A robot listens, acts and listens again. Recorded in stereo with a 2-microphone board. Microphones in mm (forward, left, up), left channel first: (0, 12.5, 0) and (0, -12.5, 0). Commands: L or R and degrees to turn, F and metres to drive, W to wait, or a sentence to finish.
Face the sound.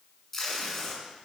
L30
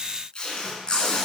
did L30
L140
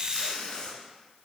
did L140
L35
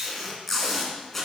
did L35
L10
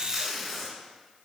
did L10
Facing the tape being pulled, 1 to 2 m away.